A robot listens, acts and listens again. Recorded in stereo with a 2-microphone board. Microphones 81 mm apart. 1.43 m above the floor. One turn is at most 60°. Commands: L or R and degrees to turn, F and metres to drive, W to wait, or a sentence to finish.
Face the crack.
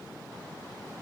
W
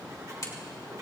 L45
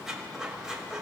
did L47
W
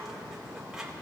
I heard a crack, but can't make it out now. It was about straight ahead or 85° left.